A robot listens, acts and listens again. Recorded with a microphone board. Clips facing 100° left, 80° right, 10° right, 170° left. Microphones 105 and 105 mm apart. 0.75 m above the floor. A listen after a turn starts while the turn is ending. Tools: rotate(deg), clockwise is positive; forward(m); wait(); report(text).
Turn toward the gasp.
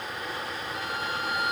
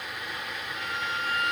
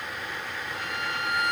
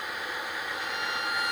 wait()
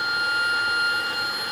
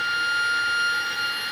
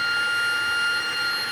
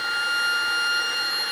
wait()
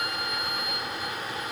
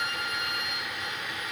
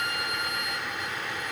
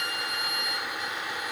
report("I can't make out a gasp, only a violin.")